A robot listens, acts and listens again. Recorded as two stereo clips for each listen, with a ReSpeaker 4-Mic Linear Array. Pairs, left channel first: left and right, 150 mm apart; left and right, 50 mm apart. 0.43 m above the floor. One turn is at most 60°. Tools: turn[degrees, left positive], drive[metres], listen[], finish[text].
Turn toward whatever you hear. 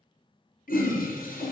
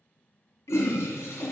Action: turn[60]
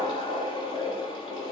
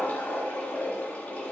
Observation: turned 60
Thought: So it is at 35° left.
Action: turn[35]
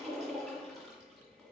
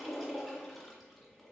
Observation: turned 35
Action: finish[Found it: a toilet flushing, straight ahead, 1 to 2 m away.]